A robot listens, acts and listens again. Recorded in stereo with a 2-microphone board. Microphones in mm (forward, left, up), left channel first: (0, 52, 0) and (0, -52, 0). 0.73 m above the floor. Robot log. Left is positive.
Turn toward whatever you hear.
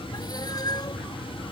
note: The cat meowing: about 40° left or 140° left.
cmd yaw +40
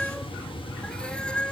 note: So it is at 10° left.
cmd yaw +10
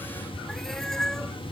end: Found it: a cat meowing, straight ahead.